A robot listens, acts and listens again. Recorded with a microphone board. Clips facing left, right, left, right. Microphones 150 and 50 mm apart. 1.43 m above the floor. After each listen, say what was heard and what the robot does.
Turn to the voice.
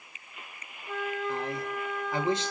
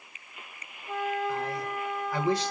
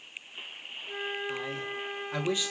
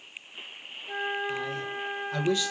The man speaking: about 20° left or 160° left. Turn 20° left.
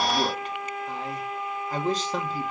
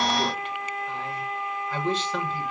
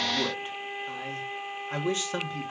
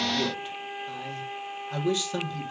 So it is at 140° left. Turn 140° left.
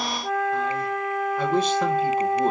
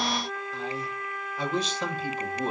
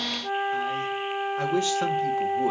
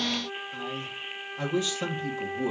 The man speaking is now 55° left. Turn 55° left.
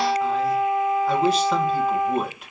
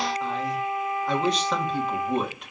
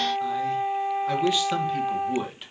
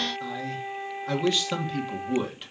Facing the man speaking, 1 to 2 m away.